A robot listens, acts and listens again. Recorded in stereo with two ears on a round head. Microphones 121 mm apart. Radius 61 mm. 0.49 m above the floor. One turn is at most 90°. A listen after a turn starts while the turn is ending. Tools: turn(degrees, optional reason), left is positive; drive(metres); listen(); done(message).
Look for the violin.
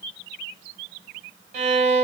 turn(degrees=-55, reason="The violin: about 55° right or 125° right.")
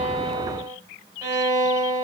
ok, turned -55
turn(degrees=-30, reason="So it is at 30° right.")
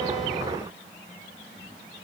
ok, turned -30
listen()
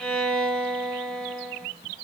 done("Facing the violin, 2 to 4 m away.")